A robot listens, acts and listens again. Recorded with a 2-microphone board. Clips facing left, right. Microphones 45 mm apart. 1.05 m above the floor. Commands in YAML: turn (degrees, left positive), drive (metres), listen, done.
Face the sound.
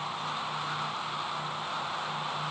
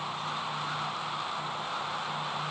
listen: true
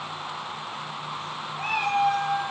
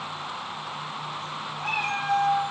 turn: 70
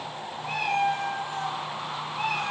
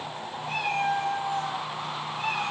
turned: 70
turn: 30
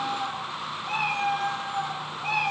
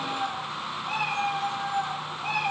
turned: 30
done: "Found it: a cat meowing, straight ahead."